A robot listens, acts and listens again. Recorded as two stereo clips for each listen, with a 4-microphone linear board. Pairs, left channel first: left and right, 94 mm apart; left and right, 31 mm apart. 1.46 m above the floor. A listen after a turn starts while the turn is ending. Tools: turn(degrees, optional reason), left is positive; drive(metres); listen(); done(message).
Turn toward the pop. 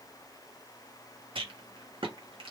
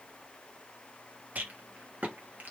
listen()
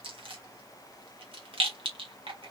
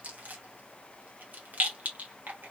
listen()
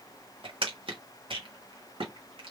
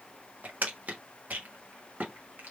done("I can't make out a pop, only a rattle.")